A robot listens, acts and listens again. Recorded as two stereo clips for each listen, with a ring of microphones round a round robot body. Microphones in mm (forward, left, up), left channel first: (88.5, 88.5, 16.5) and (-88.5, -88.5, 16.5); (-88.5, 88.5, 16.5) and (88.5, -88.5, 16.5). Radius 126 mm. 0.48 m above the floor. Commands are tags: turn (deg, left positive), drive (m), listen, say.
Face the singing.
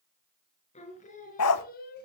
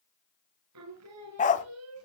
<turn deg="-10"/>
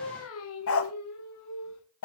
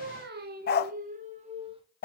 <turn deg="25"/>
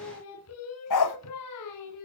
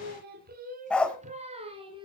<turn deg="30"/>
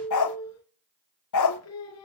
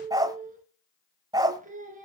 <turn deg="15"/>
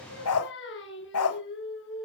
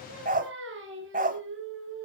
<say>Found it: singing, straight ahead, 2 to 4 m away.</say>